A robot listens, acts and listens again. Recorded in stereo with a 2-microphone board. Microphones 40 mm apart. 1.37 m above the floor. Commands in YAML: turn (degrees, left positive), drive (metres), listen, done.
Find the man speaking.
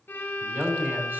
turn: -70
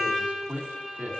turn: -40
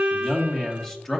turn: 15
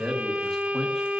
done: "Found it: a man speaking, straight ahead, 1 to 2 m away."